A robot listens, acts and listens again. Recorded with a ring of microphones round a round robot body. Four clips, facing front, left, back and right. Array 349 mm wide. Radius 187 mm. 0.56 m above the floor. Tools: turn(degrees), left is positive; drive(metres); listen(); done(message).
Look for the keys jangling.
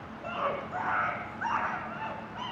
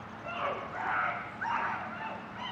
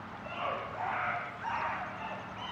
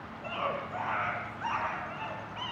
listen()
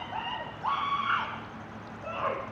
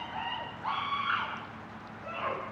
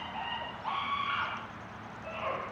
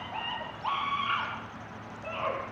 listen()
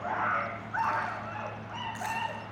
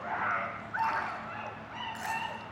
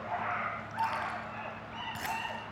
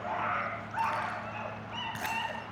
turn(degrees=-125)
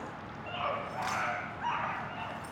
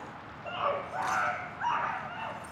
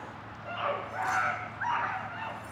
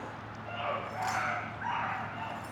done("Facing the keys jangling, over 4 m away.")